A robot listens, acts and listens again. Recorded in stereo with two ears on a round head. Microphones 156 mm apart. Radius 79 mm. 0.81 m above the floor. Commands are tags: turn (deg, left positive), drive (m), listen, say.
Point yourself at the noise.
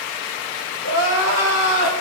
<turn deg="90"/>
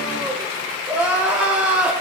<turn deg="-10"/>
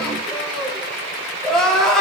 <say>Found it: crying, straight ahead.</say>